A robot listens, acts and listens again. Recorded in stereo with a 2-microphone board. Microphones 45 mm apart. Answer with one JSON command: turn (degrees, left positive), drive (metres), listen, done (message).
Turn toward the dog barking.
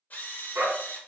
{"turn": -55}
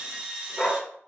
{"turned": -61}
{"done": "Found it: a dog barking, straight ahead."}